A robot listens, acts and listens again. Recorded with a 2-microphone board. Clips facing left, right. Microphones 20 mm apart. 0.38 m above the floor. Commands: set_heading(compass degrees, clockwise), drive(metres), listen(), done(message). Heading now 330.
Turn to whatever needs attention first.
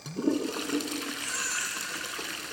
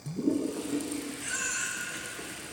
set_heading(315)
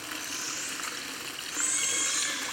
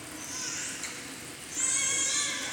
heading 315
done("Found it: a baby crying, straight ahead.")